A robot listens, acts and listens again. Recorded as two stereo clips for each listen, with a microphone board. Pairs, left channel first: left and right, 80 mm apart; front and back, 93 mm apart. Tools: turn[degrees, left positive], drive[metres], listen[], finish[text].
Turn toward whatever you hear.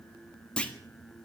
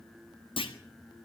Thought: The clunk: 15° left.
Action: turn[15]
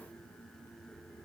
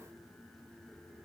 Action: finish[Facing where the clunk came from. I can't hear it now.]